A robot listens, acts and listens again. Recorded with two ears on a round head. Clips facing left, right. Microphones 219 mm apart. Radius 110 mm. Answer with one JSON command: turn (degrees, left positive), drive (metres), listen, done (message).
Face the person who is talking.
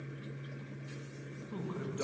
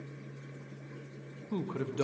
{"turn": -55}
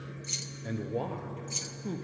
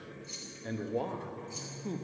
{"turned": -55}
{"done": "Facing the man speaking."}